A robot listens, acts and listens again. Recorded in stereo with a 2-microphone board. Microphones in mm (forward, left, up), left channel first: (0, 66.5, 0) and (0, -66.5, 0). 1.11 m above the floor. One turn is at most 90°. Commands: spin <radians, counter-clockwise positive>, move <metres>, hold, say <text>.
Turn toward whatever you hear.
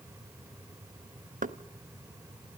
spin -1.57
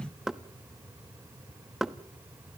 say Facing the knocking.